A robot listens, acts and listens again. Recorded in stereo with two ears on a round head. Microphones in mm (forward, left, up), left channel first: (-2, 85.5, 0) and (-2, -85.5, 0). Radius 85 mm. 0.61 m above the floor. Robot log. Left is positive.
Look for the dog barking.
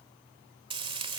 cmd idle
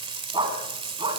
note: The dog barking: about 25° right or 155° right.
cmd yaw -25
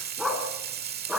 end: Found it: a dog barking, straight ahead.